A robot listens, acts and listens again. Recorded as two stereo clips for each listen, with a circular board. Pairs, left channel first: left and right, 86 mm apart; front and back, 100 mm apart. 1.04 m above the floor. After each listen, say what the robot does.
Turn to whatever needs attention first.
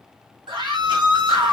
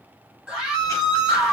Turn 100° right.
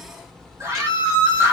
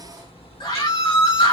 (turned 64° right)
Turn 35° right.
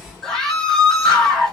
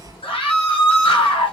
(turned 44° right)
Found it: a scream, straight ahead.